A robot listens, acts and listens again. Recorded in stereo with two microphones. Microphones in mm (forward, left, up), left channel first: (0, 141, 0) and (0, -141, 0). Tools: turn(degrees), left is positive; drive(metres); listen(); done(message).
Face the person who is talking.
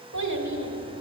turn(degrees=-90)
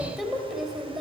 done("Found it: a child speaking, straight ahead.")